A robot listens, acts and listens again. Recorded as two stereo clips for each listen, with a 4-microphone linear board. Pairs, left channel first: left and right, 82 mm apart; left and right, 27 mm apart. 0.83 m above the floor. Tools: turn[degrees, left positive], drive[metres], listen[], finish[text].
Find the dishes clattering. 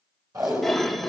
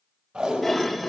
Action: turn[30]
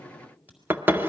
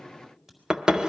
Thought: So it is at 25° right.
Action: turn[-25]
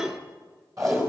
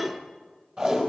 Action: finish[Found it: dishes clattering, straight ahead.]